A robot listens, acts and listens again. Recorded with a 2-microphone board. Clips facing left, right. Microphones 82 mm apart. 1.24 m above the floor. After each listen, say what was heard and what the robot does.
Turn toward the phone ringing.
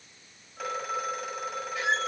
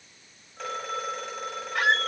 Turn 30° left.
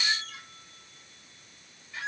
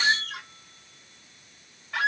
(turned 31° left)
Keep listening.
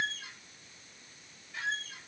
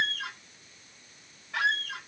Keep listening.
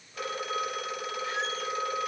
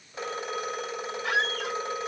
So it is at 25° right. Turn 25° right.
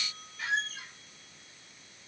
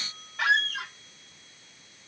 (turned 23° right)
Facing the phone ringing, over 4 m away.